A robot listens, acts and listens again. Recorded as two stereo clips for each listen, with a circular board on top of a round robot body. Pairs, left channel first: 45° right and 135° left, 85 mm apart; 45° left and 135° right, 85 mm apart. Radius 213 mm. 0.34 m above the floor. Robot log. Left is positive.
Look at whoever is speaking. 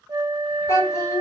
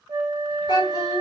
note: The child speaking: 10° left.
cmd yaw +10
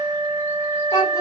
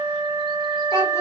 end: Found it: a child speaking, straight ahead.